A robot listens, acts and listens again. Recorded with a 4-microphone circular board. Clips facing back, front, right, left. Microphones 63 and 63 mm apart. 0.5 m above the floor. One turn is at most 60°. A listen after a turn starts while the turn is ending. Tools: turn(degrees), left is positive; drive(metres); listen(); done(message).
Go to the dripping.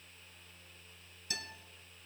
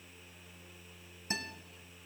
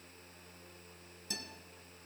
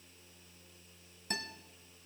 listen()
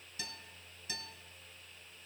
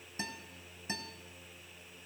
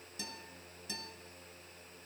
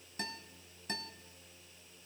listen()
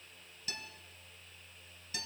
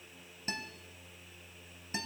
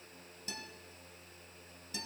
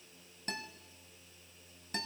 done("I can't make out dripping to turn to.")